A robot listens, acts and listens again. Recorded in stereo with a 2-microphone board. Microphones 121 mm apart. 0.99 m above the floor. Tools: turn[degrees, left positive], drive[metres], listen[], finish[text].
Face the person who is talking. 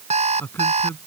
Thought: The man speaking: about 20° left or 160° left.
Action: turn[20]
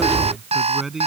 Action: finish[Found it: a man speaking, straight ahead.]